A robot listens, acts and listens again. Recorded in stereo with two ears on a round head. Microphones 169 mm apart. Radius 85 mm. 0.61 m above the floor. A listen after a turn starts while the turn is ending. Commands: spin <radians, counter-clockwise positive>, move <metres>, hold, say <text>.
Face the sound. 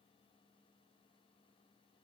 hold
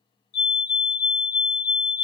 spin 1.05
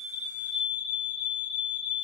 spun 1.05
say Facing the fire alarm.